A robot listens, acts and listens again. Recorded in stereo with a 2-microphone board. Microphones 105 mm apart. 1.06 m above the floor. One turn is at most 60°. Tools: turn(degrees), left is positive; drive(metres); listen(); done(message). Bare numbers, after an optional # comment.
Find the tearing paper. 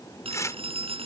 # The tearing paper: about 30° left or 150° left.
turn(30)
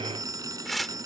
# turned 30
done("Found it: tearing paper, straight ahead.")